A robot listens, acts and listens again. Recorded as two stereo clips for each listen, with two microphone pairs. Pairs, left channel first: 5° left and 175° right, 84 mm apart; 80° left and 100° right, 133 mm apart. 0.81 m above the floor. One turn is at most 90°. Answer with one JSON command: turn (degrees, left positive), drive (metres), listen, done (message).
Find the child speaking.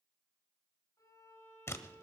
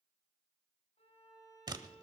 {"listen": true}
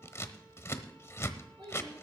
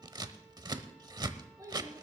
{"turn": -90}
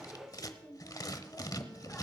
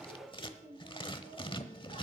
{"turn": -75}
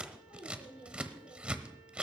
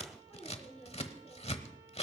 {"done": "Found it: a child speaking, straight ahead."}